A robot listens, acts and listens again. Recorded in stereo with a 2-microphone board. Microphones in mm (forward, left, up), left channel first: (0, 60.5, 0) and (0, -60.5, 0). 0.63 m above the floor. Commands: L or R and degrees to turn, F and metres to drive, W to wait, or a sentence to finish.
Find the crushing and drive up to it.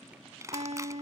R25
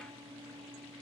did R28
W
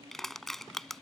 F1.0
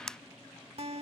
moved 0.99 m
F1.0
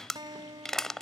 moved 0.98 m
F1.0
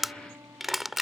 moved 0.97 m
F1.0
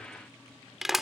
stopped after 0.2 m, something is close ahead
Arrived at the crushing, straight ahead.